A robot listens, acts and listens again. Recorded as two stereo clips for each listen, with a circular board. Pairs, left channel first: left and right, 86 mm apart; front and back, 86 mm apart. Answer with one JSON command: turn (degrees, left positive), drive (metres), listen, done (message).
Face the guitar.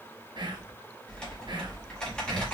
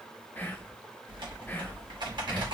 {"listen": true}
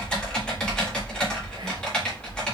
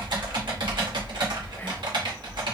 {"listen": true}
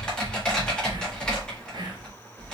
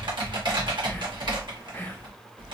{"done": "I can't make out a guitar to turn to."}